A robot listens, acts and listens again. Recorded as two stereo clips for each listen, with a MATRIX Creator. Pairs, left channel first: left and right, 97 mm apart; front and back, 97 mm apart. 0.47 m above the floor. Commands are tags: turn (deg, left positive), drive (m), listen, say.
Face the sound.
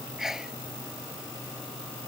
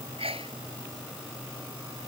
<turn deg="-175"/>
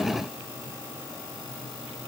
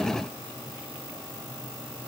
<say>Facing where the sneeze came from. I can't hear it now.</say>